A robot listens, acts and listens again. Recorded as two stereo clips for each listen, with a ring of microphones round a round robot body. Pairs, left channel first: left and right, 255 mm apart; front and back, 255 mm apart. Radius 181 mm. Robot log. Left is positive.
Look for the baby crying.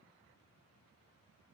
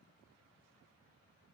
cmd idle
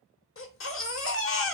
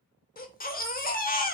note: The baby crying: 55° left.
cmd yaw +55
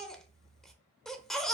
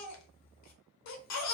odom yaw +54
end: Found it: a baby crying, straight ahead.